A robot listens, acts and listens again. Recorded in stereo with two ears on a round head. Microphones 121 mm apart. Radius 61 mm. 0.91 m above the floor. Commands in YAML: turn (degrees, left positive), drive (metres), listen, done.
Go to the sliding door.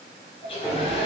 turn: -30
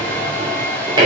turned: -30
turn: -145
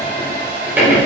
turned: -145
turn: -15
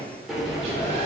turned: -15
drive: 1.0
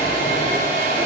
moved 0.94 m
listen: true
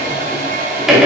drive: 1.0
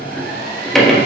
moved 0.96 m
drive: 1.0
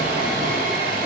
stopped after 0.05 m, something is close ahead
listen: true
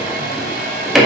done: "I am next to the sliding door."